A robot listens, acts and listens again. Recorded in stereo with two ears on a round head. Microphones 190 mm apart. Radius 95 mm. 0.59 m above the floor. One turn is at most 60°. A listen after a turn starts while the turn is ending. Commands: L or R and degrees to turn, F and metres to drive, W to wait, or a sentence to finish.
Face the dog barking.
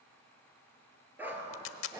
R30
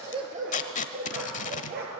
R60
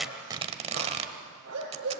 R60
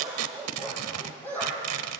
L10
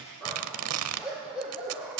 Found it: a dog barking, straight ahead.